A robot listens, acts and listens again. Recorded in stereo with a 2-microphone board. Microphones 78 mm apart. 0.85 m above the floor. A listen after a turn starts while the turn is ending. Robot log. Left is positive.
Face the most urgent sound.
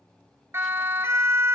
note: The siren: about 35° right or 145° right.
cmd yaw -35
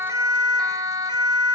note: So it is at 105° right.
cmd yaw -105
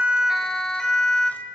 end: Found it: a siren, straight ahead.